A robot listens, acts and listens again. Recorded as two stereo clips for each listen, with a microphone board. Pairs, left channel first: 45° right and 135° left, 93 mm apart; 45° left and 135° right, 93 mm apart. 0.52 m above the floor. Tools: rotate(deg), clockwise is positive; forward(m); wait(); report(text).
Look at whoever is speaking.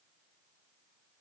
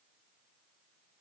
wait()
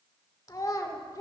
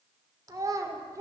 rotate(90)
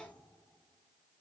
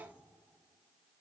wait()
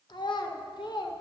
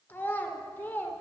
rotate(25)
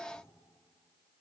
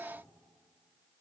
wait()
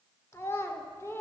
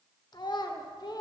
rotate(-10)
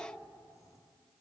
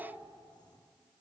wait()
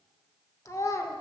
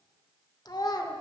report("Found it: a child speaking, straight ahead, under 1 m away.")